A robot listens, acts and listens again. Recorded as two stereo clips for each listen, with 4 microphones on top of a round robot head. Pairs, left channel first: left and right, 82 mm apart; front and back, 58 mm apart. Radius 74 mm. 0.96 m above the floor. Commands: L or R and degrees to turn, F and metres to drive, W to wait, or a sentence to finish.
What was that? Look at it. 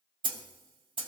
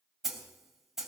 R95
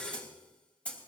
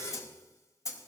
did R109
L15
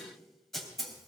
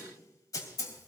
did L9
Found it: a snare drum, straight ahead, 2 to 4 m away.